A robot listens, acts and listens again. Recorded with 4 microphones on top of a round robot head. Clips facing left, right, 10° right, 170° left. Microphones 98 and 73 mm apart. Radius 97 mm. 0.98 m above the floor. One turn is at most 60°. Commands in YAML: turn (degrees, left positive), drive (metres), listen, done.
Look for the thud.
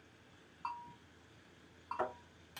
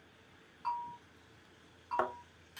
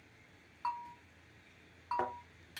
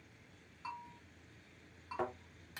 turn: -60
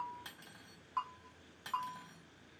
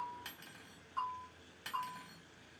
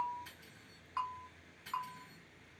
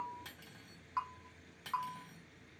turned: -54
turn: -25
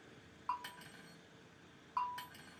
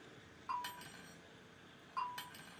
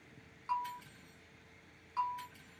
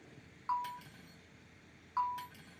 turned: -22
done: "Facing where the thud came from. I can't hear it now."